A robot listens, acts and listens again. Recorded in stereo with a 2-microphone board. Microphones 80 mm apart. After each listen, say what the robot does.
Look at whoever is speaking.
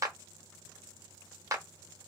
Keep listening.
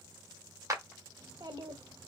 Turn 60° right.
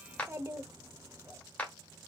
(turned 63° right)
Turn 35° right.
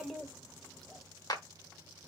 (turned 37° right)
Found it: a child speaking, straight ahead, under 1 m away.